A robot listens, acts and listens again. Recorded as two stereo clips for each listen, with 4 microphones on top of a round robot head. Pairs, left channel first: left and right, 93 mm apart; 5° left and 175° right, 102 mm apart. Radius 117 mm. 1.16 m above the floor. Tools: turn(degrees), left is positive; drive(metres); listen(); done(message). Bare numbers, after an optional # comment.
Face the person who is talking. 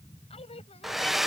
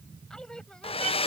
# The woman speaking: 85° left.
turn(85)
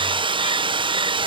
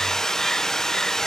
listen()
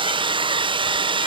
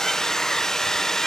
listen()
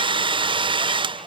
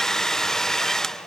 done("Facing where the woman speaking came from. I can't hear it now.")